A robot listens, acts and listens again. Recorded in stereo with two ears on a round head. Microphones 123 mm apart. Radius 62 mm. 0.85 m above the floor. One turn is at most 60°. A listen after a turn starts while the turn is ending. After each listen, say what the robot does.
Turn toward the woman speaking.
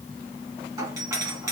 Keep listening.
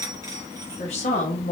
Turn 55° left.
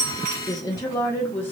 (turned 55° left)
Turn 15° left.
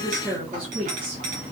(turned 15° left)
Turn 15° right.
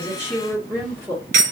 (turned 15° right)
Turn 15° right.
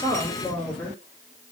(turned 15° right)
Facing the woman speaking.